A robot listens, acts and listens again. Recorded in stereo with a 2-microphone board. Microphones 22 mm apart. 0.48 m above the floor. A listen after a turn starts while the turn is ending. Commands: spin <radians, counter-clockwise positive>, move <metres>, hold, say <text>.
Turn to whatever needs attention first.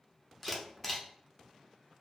hold
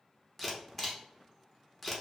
hold
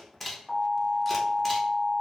spin 1.05
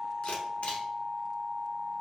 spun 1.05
spin 0.87
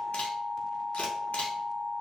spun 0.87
spin 0.35
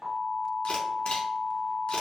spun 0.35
say Facing the alarm.